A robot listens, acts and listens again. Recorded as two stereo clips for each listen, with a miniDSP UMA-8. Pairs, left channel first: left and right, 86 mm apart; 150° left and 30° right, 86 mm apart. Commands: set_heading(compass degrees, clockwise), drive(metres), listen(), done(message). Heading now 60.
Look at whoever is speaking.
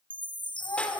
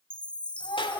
set_heading(290)
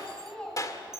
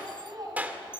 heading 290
set_heading(280)
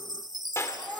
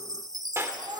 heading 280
done("Facing the child speaking, over 4 m away.")